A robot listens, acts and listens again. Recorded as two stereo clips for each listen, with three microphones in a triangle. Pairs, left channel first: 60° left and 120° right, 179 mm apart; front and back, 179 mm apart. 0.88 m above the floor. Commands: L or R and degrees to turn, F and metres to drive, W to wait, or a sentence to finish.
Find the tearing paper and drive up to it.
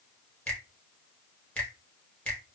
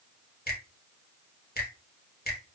W
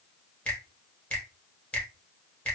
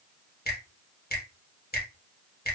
W
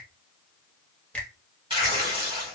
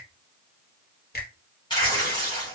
R65
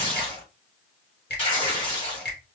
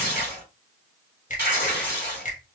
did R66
F1.0
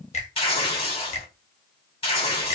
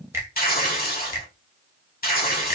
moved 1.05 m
L10
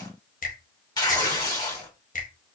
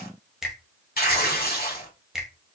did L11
F1.0
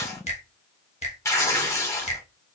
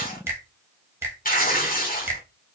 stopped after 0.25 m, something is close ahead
R10
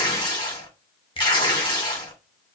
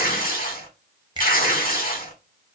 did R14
I am next to the tearing paper.